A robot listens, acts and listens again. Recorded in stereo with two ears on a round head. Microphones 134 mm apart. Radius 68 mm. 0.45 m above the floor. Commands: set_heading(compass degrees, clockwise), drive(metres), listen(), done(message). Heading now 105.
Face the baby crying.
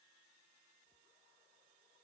listen()
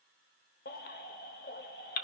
set_heading(40)
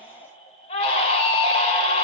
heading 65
set_heading(20)
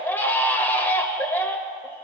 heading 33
set_heading(18)
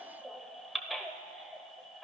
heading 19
done("Facing the baby crying, under 1 m away.")